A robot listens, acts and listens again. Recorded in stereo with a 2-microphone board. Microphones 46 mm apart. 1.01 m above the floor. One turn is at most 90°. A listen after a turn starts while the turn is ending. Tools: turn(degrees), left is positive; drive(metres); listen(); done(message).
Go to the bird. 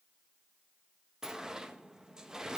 listen()
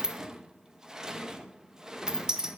listen()
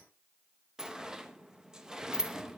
done("I can't make out a bird, only a sliding door.")